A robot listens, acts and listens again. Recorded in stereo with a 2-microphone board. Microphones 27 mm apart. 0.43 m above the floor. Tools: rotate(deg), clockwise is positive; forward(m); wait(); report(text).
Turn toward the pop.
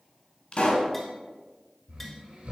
rotate(-45)
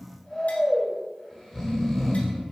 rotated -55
wait()
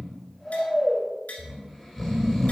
report("I heard a pop, but can't make it out now. It was about 10° right or 80° left.")